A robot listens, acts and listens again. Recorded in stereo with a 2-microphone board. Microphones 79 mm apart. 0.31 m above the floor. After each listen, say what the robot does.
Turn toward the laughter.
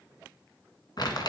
Keep listening.
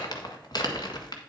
Keep listening.
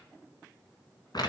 I can't make out laughter, only crumpling.